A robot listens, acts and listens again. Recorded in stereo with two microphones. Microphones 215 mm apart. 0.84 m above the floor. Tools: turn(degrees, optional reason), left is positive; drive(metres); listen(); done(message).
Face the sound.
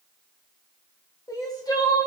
turn(degrees=15, reason="The crying: about 15° left or 165° left.")
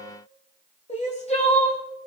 turn(degrees=150, reason="So it is at 150° left.")
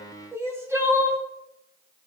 turn(degrees=-10, reason="The crying is now 10° right.")
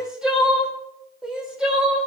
done("Found it: crying, straight ahead.")